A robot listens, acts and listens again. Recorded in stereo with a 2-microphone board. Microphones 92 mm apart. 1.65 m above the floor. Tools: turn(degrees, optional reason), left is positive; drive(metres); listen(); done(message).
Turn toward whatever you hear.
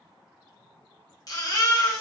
turn(degrees=45, reason="The baby crying: about 45° left or 135° left.")
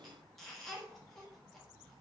listen()
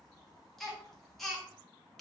done("Facing the baby crying, 1 to 2 m away.")